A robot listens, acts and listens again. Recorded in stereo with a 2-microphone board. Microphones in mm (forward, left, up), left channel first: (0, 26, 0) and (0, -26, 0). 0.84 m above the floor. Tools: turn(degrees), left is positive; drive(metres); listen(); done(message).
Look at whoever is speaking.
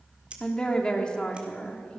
turn(degrees=20)
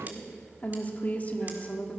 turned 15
turn(degrees=150)
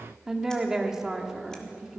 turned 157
turn(degrees=-10)
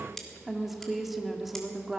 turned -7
done("Facing the woman speaking.")